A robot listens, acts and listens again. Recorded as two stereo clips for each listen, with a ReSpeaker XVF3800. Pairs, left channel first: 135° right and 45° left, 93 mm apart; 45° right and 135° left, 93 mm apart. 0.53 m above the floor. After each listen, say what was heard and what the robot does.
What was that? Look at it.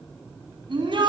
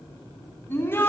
The shout: 20° left. Turn 20° left.
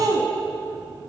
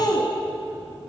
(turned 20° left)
Facing the shout, 2 to 4 m away.